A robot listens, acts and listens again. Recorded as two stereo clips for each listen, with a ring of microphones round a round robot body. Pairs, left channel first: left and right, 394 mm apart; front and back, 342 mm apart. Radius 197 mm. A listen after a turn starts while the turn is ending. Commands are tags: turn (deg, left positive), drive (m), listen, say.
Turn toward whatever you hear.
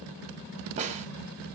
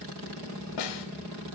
<turn deg="-15"/>
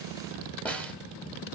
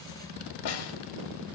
<say>Facing the snare drum.</say>